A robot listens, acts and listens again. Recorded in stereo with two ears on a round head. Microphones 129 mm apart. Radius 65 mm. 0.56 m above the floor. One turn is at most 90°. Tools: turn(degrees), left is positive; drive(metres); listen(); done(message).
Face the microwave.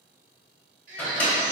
turn(degrees=30)
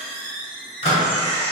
turn(degrees=90)
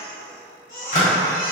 turn(degrees=45)
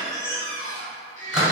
turn(degrees=-10)
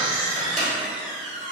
done("Facing the microwave, 1 to 2 m away.")